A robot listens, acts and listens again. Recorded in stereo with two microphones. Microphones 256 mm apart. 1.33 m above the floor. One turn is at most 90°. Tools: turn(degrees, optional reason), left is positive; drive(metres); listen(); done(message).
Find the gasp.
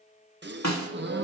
turn(degrees=-40, reason="The gasp: about 40° right or 140° right.")
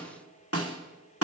listen()
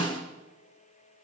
done("I heard a gasp, but can't make it out now. It was about straight ahead or 100° right.")